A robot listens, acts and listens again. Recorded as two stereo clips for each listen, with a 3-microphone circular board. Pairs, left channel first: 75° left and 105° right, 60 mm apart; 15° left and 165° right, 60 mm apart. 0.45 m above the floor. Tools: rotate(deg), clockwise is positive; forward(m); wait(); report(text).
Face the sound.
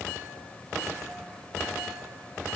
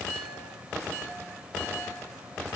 wait()
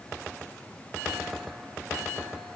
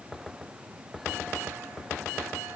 wait()
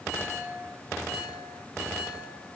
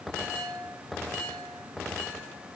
report("I can't make out anything.")